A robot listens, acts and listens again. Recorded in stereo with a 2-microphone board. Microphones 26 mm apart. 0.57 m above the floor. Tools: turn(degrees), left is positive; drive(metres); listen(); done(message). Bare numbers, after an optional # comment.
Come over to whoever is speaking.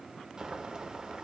listen()
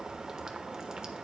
listen()
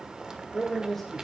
turn(30)
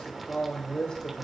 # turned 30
# So it is at 145° left.
turn(145)
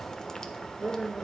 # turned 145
# The man speaking is now 15° right.
turn(-15)
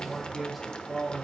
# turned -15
drive(1.0)
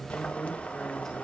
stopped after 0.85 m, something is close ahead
listen()
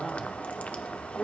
# The man speaking is now 15° left.
turn(15)
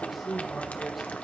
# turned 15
done("I am next to the man speaking.")